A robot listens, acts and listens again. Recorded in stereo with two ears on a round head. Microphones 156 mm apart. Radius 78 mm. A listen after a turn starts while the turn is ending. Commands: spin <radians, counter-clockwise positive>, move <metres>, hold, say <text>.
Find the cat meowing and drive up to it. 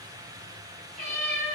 spin -0.79
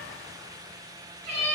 spin -1.57
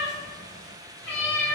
spin 0.17
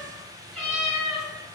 move 1.0
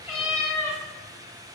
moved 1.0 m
move 1.0
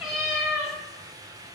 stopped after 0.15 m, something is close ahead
say Arrived at the cat meowing, straight ahead.